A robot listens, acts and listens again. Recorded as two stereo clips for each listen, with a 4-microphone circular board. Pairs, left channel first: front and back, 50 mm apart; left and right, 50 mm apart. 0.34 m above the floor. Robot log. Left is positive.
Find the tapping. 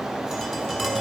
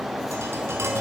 note: The tapping: 95° right.
cmd yaw -95
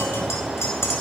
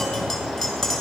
end: Facing the tapping, 2 to 4 m away.